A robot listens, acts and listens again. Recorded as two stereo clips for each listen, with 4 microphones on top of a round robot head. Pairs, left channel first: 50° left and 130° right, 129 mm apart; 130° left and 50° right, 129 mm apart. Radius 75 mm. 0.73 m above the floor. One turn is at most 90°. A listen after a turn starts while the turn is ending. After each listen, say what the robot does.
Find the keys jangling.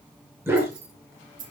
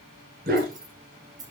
Turn 90° right.
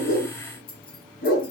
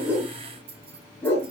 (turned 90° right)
Found it: keys jangling, straight ahead.